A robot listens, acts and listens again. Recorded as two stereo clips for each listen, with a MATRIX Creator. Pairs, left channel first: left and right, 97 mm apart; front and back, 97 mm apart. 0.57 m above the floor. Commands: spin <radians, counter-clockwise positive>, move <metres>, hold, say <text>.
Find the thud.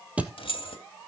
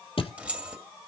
spin -0.26
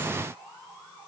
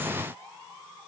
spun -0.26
say Facing where the thud came from. I can't hear it now.